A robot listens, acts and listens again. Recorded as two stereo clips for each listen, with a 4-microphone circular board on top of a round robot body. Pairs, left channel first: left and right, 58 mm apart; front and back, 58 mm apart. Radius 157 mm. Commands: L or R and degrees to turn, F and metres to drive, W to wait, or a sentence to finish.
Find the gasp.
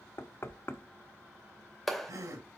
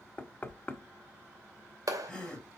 R75
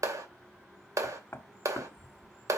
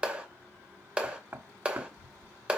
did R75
I heard a gasp from this way, but can't make it out now.